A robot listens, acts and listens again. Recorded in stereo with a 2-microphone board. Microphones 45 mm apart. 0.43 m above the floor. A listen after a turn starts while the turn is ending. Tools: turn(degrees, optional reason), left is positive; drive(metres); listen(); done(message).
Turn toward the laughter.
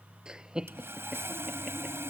turn(degrees=-15, reason="The laughter: about 15° right or 165° right.")
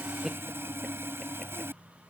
listen()
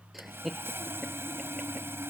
done("Found it: laughter, straight ahead.")